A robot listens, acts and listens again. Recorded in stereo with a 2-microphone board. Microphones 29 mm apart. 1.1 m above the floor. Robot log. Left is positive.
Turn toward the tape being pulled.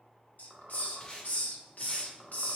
note: The tape being pulled: about 25° left or 155° left.
cmd yaw +25
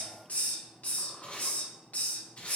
note: So it is at 130° left.
cmd yaw +130
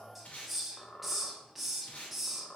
note: The tape being pulled is now 55° left.
cmd yaw +55
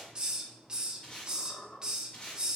note: The tape being pulled is now 30° left.
cmd yaw +30
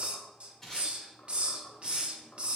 note: The tape being pulled is now 15° left.
cmd yaw +15
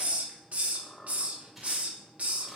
cmd idle
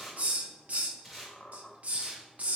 end: Facing the tape being pulled.